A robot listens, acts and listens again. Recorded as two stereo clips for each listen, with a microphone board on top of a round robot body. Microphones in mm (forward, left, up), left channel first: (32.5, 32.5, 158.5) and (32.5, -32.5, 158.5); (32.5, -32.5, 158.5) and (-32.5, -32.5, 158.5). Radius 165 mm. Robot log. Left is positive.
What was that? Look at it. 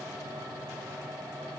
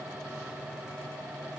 cmd idle
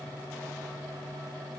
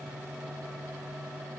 cmd idle
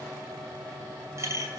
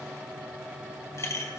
note: The clink: 45° right.
cmd yaw -45
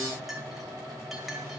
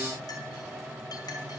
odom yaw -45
cmd idle
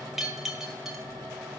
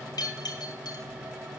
end: Found it: a clink, straight ahead.